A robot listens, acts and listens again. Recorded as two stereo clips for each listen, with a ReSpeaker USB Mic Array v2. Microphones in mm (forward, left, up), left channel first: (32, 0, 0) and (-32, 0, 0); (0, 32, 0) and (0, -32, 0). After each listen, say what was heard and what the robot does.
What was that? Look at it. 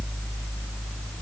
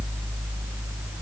Keep listening.
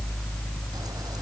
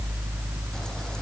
Keep listening.
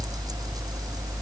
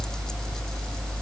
I can't make out anything.